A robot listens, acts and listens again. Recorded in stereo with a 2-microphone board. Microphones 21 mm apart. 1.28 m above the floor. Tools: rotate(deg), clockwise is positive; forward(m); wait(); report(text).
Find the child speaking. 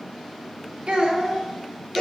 rotate(60)
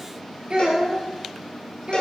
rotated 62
rotate(80)
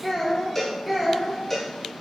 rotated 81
report("Found it: a child speaking, straight ahead, 2 to 4 m away.")